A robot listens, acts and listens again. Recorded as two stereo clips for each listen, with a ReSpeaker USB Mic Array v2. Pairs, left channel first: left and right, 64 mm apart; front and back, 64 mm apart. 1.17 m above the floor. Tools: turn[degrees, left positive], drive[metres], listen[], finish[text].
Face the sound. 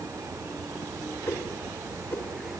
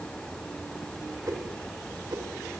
Thought: The whoosh: 145° left.
Action: turn[145]
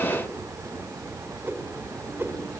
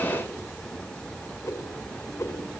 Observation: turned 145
Thought: The whoosh is now 40° right.
Action: turn[-40]
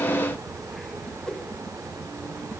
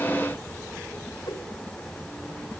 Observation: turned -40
Thought: The whoosh is now 10° left.
Action: turn[10]
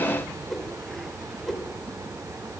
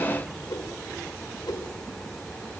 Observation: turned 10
Action: finish[Facing the whoosh.]